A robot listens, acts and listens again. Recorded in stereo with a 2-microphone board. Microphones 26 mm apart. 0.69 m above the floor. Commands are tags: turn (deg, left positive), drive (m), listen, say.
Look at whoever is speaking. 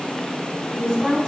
<turn deg="30"/>
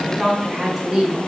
<turn deg="-20"/>
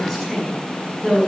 <say>Found it: a woman speaking, straight ahead.</say>